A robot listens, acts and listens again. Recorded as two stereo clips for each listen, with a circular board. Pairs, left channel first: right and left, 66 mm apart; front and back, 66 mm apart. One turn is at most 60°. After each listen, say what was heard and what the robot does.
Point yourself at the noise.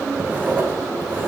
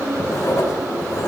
The writing: 30° left. Turn 30° left.
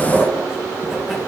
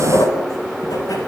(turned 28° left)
Found it: writing, straight ahead.